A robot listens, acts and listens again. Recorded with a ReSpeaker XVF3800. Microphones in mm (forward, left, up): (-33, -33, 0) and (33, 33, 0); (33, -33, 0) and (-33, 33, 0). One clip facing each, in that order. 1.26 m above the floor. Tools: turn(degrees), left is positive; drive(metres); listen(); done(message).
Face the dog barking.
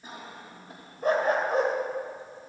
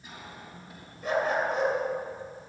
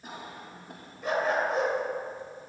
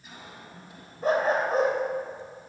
turn(degrees=180)
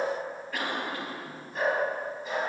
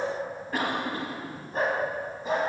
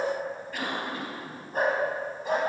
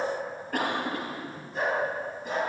turn(degrees=-10)
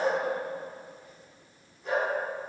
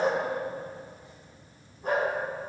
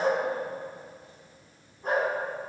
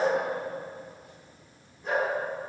done("Found it: a dog barking, straight ahead, over 4 m away.")